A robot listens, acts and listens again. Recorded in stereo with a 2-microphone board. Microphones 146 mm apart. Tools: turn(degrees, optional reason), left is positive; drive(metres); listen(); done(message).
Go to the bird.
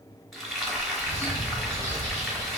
turn(degrees=60, reason="The bird: about 60° left or 120° left.")
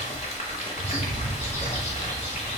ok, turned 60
turn(degrees=60, reason="So it is at 60° left.")
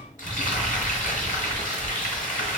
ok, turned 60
turn(degrees=20, reason="The bird is now 20° left.")
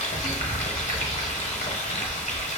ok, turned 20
listen()
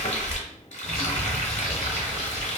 drive(metres=1.0)
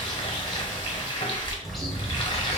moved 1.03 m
drive(metres=1.0)
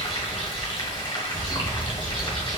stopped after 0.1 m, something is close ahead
done("I am next to the bird.")